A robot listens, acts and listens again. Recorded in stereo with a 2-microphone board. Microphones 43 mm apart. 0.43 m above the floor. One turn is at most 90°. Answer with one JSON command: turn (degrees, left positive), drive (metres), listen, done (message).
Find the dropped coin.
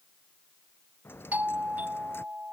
{"turn": 65}
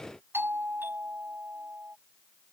{"listen": true}
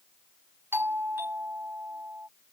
{"done": "I heard a dropped coin, but can't make it out now. It was about straight ahead or 50° left."}